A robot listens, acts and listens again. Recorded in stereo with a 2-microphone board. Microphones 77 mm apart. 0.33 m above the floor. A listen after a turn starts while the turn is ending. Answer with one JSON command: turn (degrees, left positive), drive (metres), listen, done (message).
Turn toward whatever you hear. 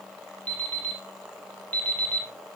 {"turn": 25}
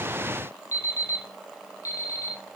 {"turn": 130}
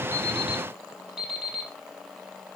{"turn": -10}
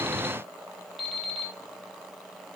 {"done": "Facing the alarm clock, over 4 m away."}